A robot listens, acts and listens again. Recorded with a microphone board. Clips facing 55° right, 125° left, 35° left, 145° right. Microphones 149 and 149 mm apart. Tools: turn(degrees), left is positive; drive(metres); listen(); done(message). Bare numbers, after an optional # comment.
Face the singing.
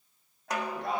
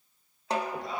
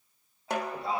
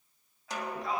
# The singing: 25° right.
turn(-25)
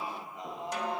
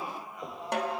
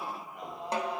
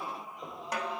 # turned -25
# The singing is now 10° left.
turn(10)
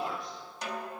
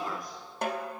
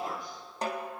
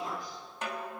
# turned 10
done("Facing the singing.")